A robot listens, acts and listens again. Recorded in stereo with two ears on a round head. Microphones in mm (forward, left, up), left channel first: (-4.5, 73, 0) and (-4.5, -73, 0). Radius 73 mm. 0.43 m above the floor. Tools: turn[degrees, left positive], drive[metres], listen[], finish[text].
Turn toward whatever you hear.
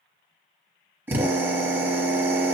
Thought: The drill: about 15° right or 165° right.
Action: turn[-15]
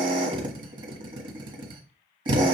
Thought: So it is at 145° right.
Action: turn[-145]
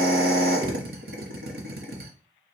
Thought: The drill is now 70° right.
Action: turn[-70]
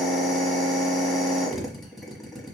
Action: finish[Found it: a drill, straight ahead, 1 to 2 m away.]